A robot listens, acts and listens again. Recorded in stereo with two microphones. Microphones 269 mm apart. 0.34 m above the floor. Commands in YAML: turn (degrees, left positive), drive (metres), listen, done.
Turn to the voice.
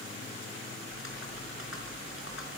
listen: true
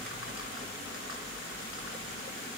listen: true
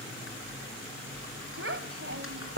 turn: -50
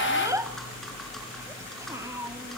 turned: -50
turn: -15
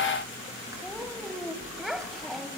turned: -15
done: "Facing the child speaking."